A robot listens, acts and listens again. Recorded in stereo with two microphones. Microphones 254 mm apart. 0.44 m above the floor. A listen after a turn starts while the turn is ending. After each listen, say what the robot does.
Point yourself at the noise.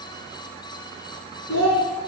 Turn 90° left.
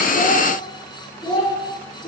Turn 30° left.
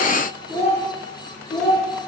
Turn 15° left.
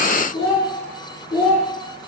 Facing the child speaking.